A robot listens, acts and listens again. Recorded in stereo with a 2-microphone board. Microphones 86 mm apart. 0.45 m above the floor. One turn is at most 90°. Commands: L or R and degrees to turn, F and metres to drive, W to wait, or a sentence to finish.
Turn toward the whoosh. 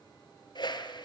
L60
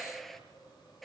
Facing the whoosh.